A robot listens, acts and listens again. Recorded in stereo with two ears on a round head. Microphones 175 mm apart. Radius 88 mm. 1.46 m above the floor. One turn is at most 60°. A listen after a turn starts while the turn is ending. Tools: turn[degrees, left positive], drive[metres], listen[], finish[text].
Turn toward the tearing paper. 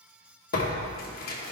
Thought: The tearing paper: about 45° left or 135° left.
Action: turn[45]
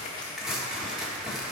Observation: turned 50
Action: finish[Facing the tearing paper.]